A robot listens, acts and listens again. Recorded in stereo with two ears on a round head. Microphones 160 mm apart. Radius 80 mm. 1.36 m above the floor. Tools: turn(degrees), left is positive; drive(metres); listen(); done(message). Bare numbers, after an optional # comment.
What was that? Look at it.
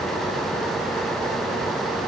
listen()
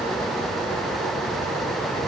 listen()
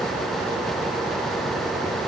done("I can't make out anything to turn to.")